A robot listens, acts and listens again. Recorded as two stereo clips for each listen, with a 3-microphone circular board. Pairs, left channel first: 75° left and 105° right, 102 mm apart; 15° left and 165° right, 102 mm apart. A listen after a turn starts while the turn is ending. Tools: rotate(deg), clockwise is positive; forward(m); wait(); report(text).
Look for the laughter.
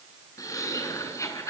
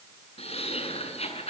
rotate(-15)
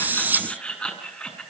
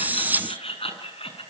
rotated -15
report("Facing the laughter, over 4 m away.")